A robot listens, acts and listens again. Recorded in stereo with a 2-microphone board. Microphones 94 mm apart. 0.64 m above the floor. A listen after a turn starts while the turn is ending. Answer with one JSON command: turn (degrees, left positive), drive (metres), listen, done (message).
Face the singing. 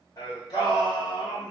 {"turn": 45}
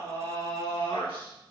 {"turn": 80}
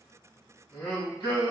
{"turn": 45}
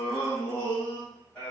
{"turn": 20}
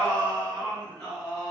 {"done": "Facing the singing, over 4 m away."}